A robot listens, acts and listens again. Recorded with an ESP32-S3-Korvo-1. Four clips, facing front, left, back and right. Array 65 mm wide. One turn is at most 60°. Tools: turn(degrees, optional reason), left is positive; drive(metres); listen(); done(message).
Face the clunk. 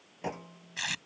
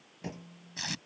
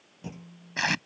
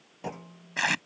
turn(degrees=-35, reason="The clunk: 35° right.")
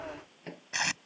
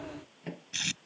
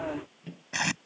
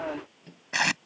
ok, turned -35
done("I heard a clunk from this way, but can't make it out now.")